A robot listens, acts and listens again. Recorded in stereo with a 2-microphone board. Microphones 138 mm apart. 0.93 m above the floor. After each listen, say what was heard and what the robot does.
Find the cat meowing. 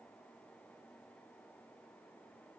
Keep listening.
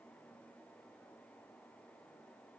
Keep listening.
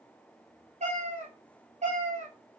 The cat meowing: about 55° right or 125° right. Turn 55° right.
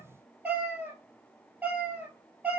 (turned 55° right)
So it is at 10° right. Turn 10° right.
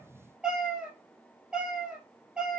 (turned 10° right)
Found it: a cat meowing, straight ahead, 1 to 2 m away.